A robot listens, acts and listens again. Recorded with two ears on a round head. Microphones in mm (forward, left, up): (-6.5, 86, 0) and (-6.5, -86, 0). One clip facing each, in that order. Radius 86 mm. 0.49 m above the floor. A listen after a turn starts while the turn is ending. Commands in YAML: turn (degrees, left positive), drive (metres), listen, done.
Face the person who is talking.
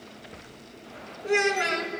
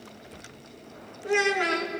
turn: 20
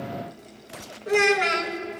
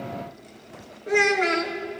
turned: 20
turn: 135
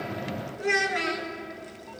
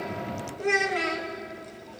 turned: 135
turn: 15
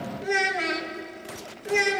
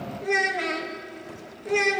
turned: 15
done: "Facing the child speaking."